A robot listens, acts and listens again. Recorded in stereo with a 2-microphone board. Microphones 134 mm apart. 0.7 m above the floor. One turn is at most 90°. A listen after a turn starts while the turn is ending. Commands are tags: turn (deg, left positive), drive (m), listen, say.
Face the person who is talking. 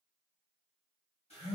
<listen/>
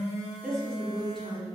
<turn deg="30"/>
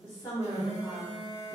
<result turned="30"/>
<turn deg="90"/>
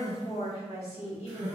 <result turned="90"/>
<turn deg="60"/>
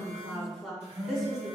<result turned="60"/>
<say>Found it: a woman speaking, straight ahead, 1 to 2 m away.</say>